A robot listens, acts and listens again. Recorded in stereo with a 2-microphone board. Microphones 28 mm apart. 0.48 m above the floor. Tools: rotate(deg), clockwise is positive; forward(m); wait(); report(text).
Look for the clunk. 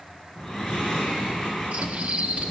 wait()
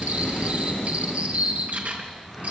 wait()
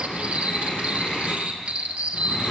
report("I can't make out a clunk to turn to.")